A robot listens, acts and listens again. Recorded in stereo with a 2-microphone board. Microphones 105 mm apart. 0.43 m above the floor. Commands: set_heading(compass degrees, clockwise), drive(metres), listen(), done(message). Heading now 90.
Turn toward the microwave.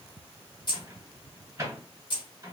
set_heading(125)
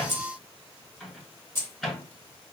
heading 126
done("Facing the microwave.")